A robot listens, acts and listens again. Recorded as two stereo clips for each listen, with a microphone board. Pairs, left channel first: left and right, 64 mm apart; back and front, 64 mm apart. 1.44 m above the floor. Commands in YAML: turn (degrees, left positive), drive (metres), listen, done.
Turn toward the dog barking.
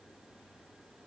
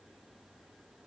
listen: true
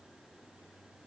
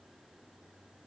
listen: true
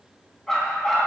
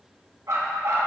done: "Facing the dog barking."